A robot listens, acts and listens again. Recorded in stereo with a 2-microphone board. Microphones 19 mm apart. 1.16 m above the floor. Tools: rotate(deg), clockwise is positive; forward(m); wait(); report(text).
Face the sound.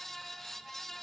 wait()
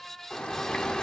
rotate(-65)
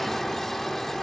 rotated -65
rotate(-15)
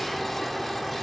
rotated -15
report("Found it: a bird, straight ahead, 1 to 2 m away.")